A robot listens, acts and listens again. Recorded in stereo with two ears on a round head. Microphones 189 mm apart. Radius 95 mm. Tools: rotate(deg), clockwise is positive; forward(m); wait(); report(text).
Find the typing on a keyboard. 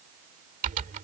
rotate(40)
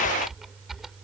report("Found it: typing on a keyboard, straight ahead.")